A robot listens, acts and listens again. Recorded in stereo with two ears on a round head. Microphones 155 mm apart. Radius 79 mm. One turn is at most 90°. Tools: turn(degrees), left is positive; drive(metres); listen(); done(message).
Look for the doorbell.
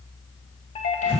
turn(degrees=35)
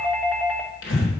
done("Found it: a doorbell, straight ahead.")